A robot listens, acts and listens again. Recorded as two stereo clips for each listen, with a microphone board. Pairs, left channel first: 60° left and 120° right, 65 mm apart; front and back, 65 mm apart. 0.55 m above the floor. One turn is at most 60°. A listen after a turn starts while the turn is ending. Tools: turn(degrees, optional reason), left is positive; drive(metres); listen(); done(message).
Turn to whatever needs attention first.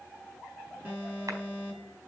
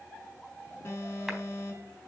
turn(degrees=-55, reason="The alarm: 55° right.")
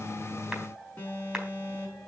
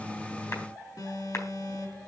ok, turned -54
done("Found it: an alarm, straight ahead.")